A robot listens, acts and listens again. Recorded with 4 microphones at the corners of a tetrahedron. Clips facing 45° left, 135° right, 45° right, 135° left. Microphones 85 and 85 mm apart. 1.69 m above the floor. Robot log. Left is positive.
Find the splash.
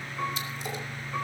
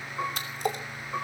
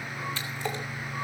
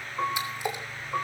note: The splash: 150° right.
cmd yaw -150
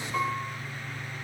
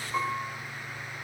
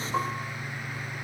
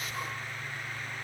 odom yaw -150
end: I heard a splash from this way, but can't make it out now.